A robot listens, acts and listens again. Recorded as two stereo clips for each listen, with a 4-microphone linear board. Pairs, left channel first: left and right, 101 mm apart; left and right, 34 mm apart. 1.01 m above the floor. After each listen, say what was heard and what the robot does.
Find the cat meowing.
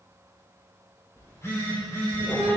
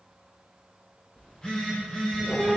The cat meowing: about 15° left or 165° left. Turn 15° left.
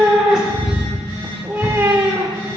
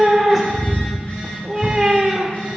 So it is at 30° right. Turn 30° right.
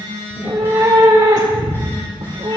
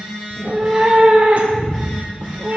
The cat meowing is now 50° right. Turn 50° right.
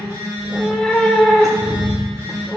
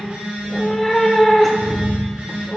Facing the cat meowing.